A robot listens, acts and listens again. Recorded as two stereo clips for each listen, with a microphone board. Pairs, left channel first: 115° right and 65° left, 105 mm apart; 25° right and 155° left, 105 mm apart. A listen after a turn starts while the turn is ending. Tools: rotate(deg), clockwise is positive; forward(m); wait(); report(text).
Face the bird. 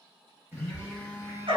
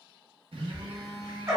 rotate(-170)
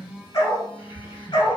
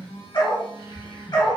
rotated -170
report("Found it: a bird, straight ahead, under 1 m away.")